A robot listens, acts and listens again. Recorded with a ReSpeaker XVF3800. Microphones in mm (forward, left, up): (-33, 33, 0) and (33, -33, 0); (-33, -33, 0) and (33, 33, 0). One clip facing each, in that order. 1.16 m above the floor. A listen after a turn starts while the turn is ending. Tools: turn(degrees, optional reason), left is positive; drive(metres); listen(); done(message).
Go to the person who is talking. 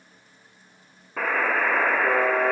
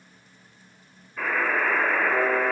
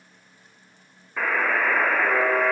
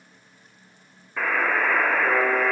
listen()
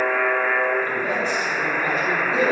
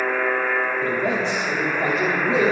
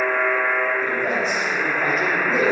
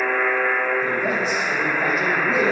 turn(degrees=-45, reason="The man speaking: 45° right.")
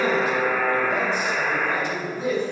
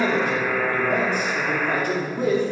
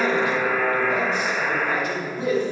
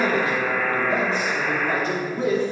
turn(degrees=-10, reason="The man speaking is now 10° right.")
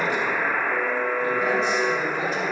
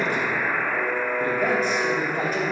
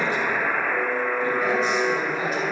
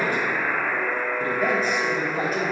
drive(metres=1.0)
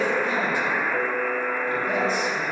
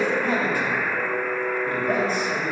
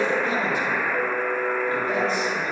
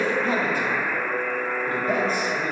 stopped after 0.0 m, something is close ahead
done("Blocked. The man speaking is further on, straight ahead.")